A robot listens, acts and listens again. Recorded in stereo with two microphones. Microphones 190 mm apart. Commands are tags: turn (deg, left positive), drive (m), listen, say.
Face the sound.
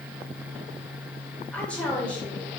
<turn deg="30"/>
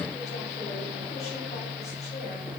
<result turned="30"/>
<listen/>
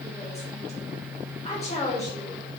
<turn deg="145"/>
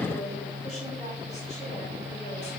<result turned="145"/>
<listen/>
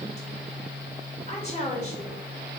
<turn deg="40"/>
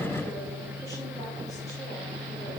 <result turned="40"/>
<listen/>
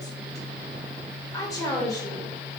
<turn deg="20"/>
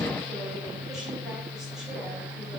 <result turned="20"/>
<listen/>
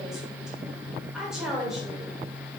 <say>Facing the woman speaking.</say>